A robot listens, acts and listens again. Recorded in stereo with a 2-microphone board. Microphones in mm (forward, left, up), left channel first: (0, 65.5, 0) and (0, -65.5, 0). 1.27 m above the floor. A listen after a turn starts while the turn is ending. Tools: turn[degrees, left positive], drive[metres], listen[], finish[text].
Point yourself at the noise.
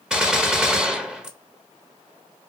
Action: turn[-30]
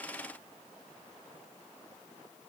Action: listen[]
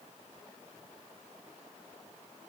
Action: finish[I heard a gunshot, but can't make it out now. It was about 25° left or 145° right.]